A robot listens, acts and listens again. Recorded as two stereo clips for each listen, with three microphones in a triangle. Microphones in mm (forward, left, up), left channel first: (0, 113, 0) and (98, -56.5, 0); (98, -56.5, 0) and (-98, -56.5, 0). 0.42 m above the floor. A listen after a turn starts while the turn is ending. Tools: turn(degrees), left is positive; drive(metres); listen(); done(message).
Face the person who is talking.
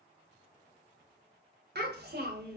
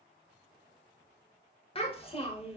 turn(degrees=-55)
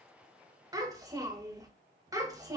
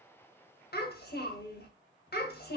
turn(degrees=10)
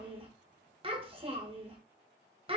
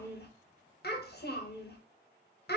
done("Facing the child speaking, under 1 m away.")